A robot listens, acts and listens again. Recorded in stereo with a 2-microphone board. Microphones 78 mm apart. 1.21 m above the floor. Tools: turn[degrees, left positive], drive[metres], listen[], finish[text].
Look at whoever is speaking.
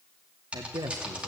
Thought: The man speaking: about 65° right or 115° right.
Action: turn[-65]
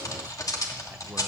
Action: listen[]
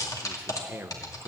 Thought: So it is at 30° right.
Action: turn[-30]
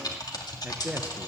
Thought: The man speaking is now 20° right.
Action: turn[-20]
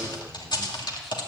Action: listen[]
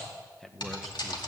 Action: finish[Facing the man speaking.]